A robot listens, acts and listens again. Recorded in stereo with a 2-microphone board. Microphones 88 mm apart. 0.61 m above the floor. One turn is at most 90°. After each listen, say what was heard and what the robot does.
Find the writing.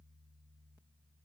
Keep listening.
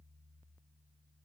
Keep listening.
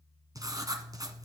The writing: about 50° right or 130° right. Turn 50° right.
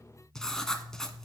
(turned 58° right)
Found it: writing, straight ahead.